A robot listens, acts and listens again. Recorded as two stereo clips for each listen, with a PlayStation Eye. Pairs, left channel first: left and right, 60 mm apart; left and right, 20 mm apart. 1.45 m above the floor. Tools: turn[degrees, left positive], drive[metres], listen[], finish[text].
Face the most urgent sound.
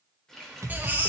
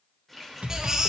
Thought: The baby crying: about 30° right or 150° right.
Action: turn[-30]
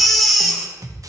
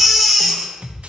Action: finish[Found it: a baby crying, straight ahead, 1 to 2 m away.]